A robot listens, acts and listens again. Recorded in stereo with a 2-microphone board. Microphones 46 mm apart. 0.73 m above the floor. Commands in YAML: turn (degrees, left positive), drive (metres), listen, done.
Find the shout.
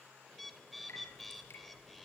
listen: true
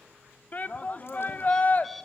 turn: 35
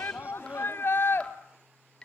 turn: 100
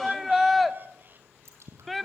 done: "Found it: a shout, straight ahead, 1 to 2 m away."